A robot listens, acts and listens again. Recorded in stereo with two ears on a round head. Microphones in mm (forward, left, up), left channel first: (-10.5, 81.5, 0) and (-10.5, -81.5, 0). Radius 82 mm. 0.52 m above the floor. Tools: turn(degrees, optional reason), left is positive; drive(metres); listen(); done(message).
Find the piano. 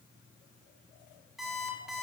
listen()
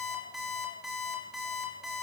listen()
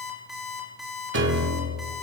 turn(degrees=-70, reason="The piano: about 70° right or 110° right.")
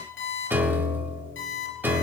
turn(degrees=-10, reason="So it is at 10° right.")
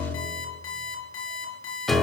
done("Found it: a piano, straight ahead.")